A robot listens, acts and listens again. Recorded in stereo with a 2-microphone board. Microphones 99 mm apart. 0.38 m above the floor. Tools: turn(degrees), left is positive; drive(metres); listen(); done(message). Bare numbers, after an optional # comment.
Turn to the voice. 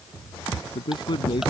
# The man speaking: about 50° left or 130° left.
turn(50)
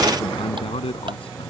# So it is at 75° left.
turn(75)
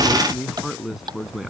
done("Found it: a man speaking, straight ahead.")